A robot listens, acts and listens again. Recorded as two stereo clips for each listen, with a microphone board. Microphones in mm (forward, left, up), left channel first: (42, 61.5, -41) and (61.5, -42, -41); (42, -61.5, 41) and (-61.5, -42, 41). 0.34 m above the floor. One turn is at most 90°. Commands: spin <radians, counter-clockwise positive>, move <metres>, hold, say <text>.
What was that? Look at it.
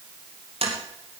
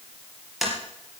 spin -1.57
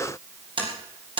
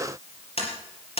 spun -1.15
spin -0.61
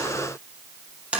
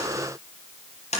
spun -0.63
say Facing the tapping.